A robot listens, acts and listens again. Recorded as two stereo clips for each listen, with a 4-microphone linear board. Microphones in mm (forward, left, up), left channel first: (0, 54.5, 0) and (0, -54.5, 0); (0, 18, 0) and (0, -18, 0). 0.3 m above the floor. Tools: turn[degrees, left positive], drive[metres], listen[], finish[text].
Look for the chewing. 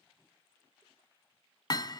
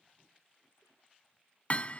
Action: listen[]
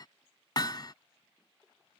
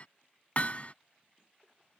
Action: listen[]
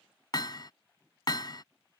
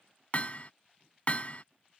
Action: finish[I can't make out chewing to turn to.]